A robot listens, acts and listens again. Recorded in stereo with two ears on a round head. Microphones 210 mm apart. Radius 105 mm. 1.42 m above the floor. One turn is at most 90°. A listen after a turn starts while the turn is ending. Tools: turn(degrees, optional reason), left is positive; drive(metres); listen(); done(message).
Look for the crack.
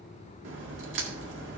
turn(degrees=-55, reason="The crack: about 55° right or 125° right.")
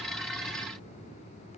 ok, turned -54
listen()
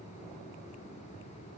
done("I heard a crack, but can't make it out now. It was about straight ahead or 70° right.")